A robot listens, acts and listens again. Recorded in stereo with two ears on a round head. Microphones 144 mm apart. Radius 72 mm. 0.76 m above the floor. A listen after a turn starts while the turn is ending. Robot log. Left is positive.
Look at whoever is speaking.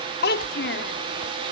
note: The child speaking: about 70° left or 110° left.
cmd yaw +70
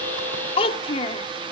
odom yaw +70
note: So it is at 35° left.
cmd yaw +35
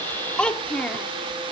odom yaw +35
end: Facing the child speaking, 1 to 2 m away.